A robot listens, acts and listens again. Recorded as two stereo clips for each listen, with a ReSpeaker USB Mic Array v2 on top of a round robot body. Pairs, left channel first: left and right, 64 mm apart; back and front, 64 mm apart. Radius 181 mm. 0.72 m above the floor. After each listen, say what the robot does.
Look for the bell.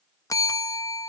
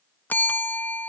Turn 120° left.
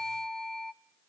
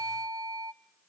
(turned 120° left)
Facing the bell.